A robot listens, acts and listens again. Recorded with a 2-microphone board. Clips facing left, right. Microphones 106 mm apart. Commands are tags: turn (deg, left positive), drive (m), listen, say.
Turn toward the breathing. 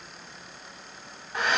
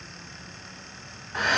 <listen/>
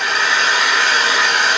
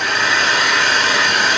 <listen/>
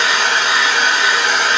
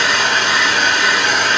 <say>I can't make out breathing to turn to.</say>